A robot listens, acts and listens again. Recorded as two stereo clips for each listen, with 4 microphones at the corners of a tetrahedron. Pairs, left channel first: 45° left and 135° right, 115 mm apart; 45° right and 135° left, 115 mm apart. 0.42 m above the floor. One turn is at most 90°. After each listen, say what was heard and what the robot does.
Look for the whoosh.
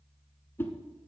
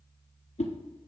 The whoosh: 25° right. Turn 25° right.
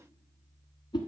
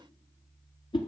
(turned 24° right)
Facing the whoosh, 1 to 2 m away.